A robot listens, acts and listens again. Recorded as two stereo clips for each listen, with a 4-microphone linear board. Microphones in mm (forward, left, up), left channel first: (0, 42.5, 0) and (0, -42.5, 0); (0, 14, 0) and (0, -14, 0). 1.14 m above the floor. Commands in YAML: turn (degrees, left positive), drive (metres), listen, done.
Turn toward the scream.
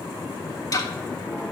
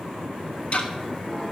listen: true
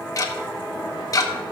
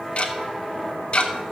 listen: true
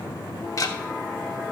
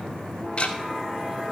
done: "I can't make out a scream to turn to."